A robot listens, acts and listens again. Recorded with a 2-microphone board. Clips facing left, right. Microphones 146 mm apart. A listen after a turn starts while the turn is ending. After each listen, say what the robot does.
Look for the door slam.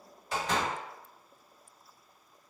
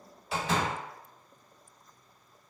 Turn 30° right.
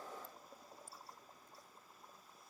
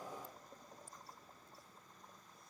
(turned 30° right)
Keep listening.
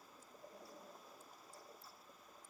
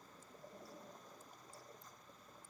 I heard a door slam, but can't make it out now. It was about 25° left or 145° right.